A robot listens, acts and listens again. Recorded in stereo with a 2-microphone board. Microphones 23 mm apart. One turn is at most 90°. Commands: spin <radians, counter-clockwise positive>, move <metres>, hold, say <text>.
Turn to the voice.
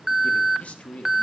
spin 1.05
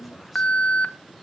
hold
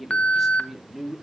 spin -0.26
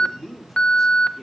say Found it: a man speaking, straight ahead.